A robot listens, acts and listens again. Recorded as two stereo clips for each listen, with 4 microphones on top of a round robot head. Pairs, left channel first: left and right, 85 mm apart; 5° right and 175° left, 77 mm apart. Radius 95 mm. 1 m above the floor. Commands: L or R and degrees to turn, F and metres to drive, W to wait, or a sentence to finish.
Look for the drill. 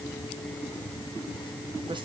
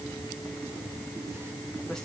W
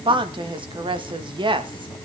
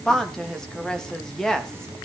W
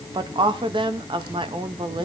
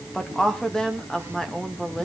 I can't make out a drill, only a woman speaking.